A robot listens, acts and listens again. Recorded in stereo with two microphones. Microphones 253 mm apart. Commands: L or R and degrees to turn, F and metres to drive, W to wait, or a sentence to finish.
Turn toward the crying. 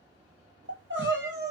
R45
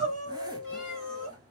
R85
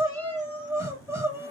R10
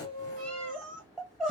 Facing the crying.